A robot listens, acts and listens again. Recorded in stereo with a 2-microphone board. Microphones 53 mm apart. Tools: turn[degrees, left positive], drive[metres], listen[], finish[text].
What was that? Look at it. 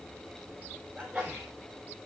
Action: turn[-30]
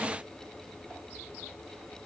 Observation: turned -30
Action: listen[]
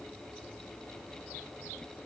Action: finish[I heard a sneeze, but can't make it out now. It was about 20° left or 140° right.]